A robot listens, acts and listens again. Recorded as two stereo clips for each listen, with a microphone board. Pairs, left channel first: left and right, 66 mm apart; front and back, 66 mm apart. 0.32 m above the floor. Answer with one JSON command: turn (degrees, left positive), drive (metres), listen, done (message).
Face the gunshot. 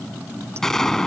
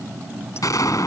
{"turn": 10}
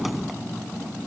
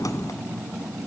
{"done": "I heard a gunshot from this way, but can't make it out now."}